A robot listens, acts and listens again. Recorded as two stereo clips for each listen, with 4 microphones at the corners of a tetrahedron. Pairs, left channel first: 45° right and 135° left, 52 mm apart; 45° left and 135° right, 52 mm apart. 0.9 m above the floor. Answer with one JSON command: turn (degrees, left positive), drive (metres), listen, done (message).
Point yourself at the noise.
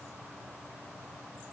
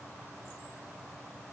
{"listen": true}
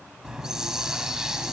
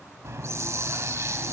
{"turn": -145}
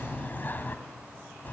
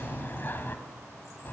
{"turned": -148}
{"done": "Facing the hiss, 1 to 2 m away."}